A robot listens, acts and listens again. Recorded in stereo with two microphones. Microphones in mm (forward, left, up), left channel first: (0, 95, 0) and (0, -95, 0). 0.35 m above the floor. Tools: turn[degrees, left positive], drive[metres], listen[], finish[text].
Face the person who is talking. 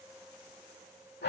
Action: listen[]
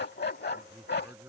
Action: turn[-30]
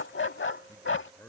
Thought: So it is at 10° left.
Action: turn[10]
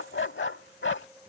Action: listen[]
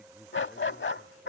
Action: listen[]
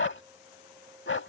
Action: finish[Facing where the man speaking came from. I can't hear it now.]